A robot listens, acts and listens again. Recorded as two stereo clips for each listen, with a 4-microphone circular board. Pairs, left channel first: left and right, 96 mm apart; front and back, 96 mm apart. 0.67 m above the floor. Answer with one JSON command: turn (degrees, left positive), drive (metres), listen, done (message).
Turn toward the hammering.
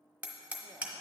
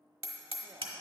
{"turn": -165}
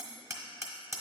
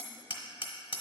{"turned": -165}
{"turn": -30}
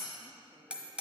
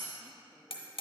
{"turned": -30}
{"turn": -10}
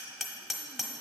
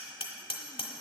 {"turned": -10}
{"done": "Facing the hammering, 1 to 2 m away."}